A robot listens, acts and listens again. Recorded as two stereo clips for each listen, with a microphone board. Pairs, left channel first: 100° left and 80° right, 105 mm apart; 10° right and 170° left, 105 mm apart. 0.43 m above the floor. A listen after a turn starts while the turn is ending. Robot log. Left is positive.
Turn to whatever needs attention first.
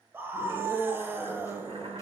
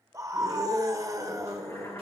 note: The scream: 140° right.
cmd yaw -140
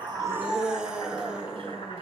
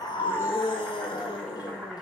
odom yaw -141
end: Facing the scream, 1 to 2 m away.